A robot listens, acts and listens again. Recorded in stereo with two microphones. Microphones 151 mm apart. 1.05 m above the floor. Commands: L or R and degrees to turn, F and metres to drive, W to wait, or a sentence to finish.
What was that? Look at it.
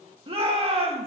R40
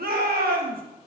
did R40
R100
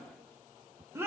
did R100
R15
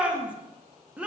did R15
R10
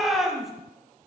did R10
Facing the shout, 1 to 2 m away.